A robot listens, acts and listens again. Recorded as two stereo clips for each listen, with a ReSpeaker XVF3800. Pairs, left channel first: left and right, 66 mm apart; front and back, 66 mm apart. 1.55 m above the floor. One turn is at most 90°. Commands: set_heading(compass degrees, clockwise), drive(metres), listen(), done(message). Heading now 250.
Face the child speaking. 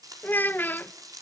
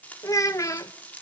set_heading(220)
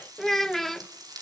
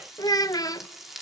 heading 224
done("Facing the child speaking.")